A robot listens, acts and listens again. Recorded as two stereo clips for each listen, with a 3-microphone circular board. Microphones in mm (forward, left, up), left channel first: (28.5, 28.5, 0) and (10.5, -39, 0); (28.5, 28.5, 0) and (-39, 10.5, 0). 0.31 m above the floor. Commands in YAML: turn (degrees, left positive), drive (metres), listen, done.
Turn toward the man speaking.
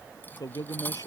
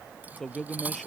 turn: 100
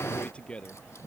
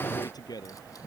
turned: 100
done: "Facing the man speaking."